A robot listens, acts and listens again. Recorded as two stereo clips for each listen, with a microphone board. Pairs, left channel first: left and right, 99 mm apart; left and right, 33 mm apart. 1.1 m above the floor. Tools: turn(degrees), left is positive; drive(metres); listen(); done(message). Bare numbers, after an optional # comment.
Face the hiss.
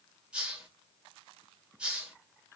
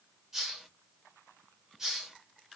turn(-30)
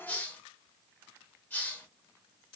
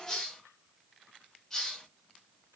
# So it is at 20° left.
turn(20)
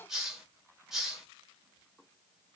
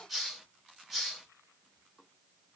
done("Found it: a hiss, straight ahead, 1 to 2 m away.")